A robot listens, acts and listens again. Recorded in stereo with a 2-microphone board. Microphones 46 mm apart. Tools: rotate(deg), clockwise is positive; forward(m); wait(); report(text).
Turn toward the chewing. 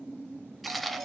rotate(-30)
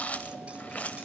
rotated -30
rotate(-150)
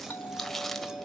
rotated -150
report("Facing the chewing.")